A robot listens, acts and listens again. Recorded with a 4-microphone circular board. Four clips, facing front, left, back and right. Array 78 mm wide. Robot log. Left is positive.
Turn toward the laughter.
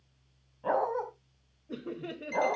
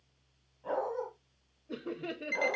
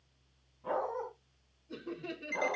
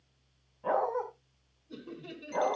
note: The laughter: 65° left.
cmd yaw +65
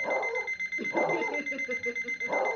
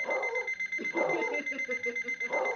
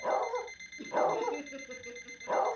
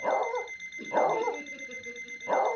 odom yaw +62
cmd idle
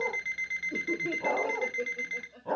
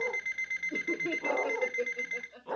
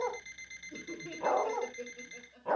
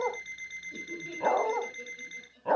note: The laughter is now 65° left.
cmd yaw +65
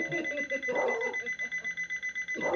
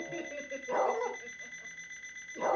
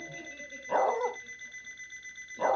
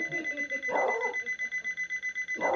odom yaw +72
cmd idle
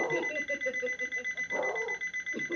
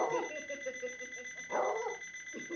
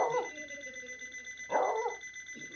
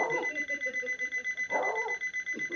cmd idle
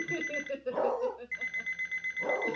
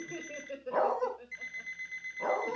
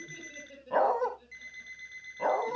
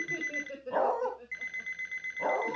end: Facing the laughter, 2 to 4 m away.